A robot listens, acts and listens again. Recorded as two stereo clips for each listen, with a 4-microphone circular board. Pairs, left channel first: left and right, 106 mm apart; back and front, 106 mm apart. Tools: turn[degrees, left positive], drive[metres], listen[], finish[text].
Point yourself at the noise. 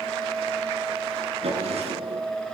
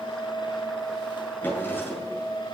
Thought: The drawer: 110° right.
Action: turn[-110]
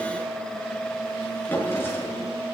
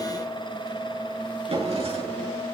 Thought: The drawer is now 20° left.
Action: turn[20]
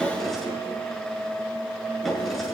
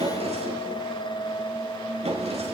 Action: finish[Facing the drawer.]